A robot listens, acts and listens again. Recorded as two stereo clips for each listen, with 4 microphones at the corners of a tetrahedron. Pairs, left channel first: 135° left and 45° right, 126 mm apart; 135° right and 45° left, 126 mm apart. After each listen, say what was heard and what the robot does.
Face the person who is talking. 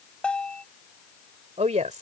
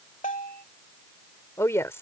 The woman speaking: 65° right. Turn 65° right.
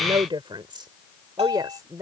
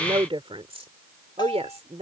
The woman speaking is now 15° left. Turn 15° left.
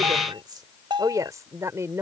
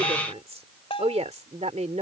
The woman speaking is now 25° left. Turn 25° left.
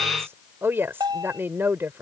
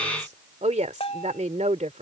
The woman speaking is now 25° left. Turn 25° left.
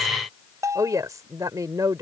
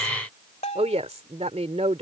The woman speaking is now 15° left. Turn 15° left.
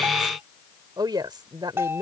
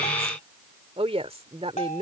The woman speaking is now 10° left. Turn 10° left.
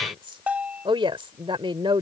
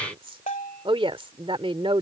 Facing the woman speaking.